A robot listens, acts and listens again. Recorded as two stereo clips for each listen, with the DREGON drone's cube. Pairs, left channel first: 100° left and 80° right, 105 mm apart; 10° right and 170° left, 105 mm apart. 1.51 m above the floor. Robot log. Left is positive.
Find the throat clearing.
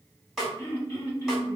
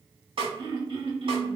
note: The throat clearing: 160° left.
cmd yaw +160
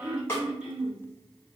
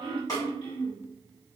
end: Found it: throat clearing, straight ahead, 1 to 2 m away.